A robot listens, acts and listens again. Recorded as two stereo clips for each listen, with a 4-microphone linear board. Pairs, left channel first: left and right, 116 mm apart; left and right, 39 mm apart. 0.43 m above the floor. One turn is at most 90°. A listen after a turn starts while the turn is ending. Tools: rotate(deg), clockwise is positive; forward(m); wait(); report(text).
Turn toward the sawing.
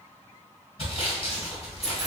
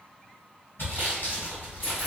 rotate(-60)
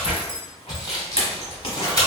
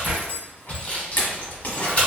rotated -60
rotate(-40)
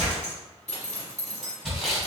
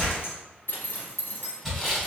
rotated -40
report("Found it: sawing, straight ahead.")